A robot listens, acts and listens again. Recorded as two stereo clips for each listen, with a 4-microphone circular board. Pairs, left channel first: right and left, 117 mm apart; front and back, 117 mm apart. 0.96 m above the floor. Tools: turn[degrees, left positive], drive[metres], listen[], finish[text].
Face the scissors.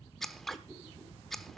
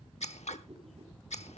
Action: finish[Facing the scissors, 1 to 2 m away.]